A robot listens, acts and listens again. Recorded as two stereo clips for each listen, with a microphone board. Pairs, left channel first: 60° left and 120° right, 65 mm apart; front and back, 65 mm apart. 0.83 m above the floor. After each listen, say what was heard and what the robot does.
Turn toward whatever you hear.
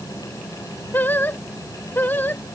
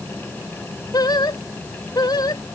Facing the singing.